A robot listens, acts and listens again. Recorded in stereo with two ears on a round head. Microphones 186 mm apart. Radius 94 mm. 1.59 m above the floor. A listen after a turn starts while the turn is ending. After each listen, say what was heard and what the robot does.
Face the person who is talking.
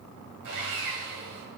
Keep listening.
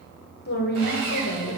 The woman speaking: about 50° left or 130° left. Turn 50° left.
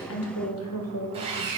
So it is at 80° left. Turn 80° left.
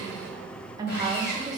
The woman speaking is now 15° right. Turn 15° right.
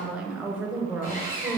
Found it: a woman speaking, straight ahead, 1 to 2 m away.